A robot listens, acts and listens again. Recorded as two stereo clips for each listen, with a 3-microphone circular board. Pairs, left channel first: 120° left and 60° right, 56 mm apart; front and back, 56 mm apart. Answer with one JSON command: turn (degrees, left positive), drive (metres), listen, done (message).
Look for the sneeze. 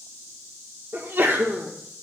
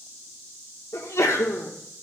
{"turn": -15}
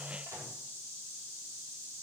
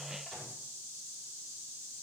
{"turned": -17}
{"done": "Facing where the sneeze came from. I can't hear it now."}